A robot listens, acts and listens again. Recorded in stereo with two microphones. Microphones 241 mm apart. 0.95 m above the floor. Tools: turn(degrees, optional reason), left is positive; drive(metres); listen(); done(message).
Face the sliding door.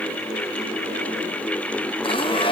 listen()
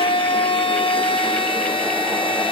listen()
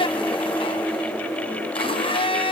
done("I can't make out a sliding door to turn to.")